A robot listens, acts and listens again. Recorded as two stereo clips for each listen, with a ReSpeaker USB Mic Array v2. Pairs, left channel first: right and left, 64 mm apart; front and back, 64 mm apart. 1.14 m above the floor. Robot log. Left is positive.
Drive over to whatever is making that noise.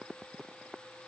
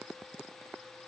cmd idle
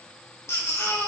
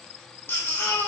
note: The baby crying: 55° right.
cmd yaw -55
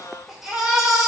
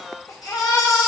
cmd fwd 1.0
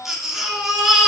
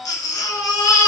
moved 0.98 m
cmd fwd 1.0
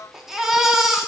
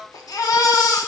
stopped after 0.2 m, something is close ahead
end: I am next to the baby crying.